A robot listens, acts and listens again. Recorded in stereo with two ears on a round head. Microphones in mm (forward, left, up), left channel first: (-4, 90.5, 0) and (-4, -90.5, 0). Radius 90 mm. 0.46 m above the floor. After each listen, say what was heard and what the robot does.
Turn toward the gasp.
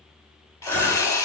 Turn 30° left.
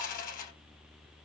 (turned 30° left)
Keep listening.
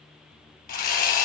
I heard a gasp, but can't make it out now. It was about 20° right or 140° left.